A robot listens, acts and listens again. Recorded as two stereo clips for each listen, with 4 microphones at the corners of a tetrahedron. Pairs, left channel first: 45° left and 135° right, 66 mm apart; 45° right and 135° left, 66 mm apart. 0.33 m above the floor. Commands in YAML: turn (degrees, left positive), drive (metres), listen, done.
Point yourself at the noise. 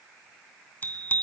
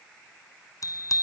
turn: -15
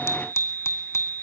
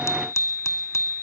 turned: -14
done: "Facing the bicycle bell."